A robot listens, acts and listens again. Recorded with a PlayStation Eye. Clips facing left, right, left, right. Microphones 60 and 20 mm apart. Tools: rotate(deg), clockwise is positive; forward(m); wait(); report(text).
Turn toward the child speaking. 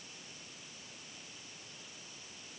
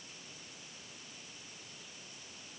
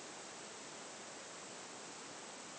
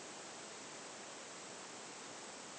wait()
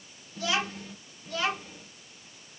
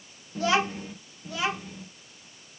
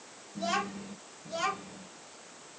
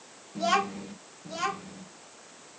rotate(30)
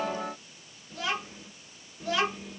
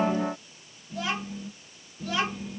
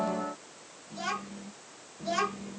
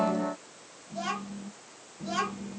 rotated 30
rotate(-30)
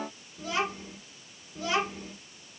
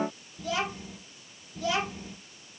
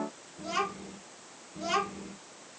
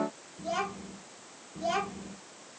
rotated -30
rotate(-150)
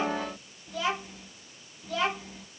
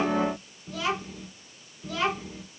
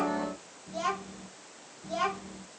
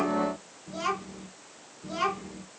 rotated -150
report("Found it: a child speaking, straight ahead, 2 to 4 m away.")